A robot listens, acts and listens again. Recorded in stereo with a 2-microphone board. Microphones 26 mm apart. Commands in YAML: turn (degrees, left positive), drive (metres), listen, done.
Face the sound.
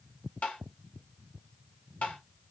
turn: 60
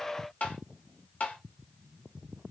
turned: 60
turn: 55
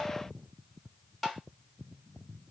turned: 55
done: "Facing the tapping."